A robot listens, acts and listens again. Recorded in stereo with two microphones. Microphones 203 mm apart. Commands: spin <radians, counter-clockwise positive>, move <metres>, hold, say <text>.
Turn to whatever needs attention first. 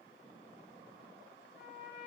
hold
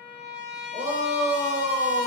spin -0.61
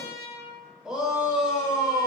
say Facing the shout, under 1 m away.